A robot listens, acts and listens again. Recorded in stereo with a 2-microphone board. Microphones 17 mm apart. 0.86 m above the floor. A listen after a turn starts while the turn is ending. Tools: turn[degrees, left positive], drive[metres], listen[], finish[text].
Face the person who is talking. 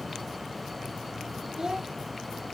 Thought: The child speaking: about 40° right or 140° right.
Action: turn[-40]
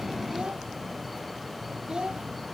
Thought: So it is at 100° right.
Action: turn[-100]
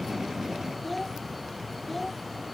Action: finish[Found it: a child speaking, straight ahead.]